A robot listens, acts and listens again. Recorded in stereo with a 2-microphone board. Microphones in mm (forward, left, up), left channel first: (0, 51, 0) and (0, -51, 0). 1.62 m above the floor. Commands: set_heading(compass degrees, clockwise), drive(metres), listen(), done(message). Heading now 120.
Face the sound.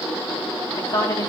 set_heading(75)
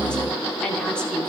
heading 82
set_heading(72)
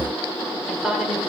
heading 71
done("Facing the woman speaking, over 4 m away.")